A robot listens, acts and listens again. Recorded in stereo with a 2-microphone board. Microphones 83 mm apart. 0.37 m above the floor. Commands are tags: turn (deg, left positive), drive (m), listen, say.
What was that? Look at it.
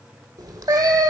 <turn deg="-45"/>
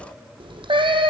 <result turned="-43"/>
<turn deg="-95"/>
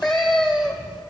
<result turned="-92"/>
<say>Facing the cat meowing.</say>